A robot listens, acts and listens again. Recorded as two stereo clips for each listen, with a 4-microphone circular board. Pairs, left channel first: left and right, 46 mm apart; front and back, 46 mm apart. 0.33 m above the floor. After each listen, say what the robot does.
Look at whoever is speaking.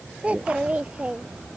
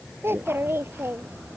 Turn 150° right.
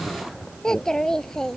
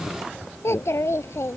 Turn 10° left.
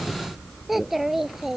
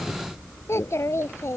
Found it: a child speaking, straight ahead.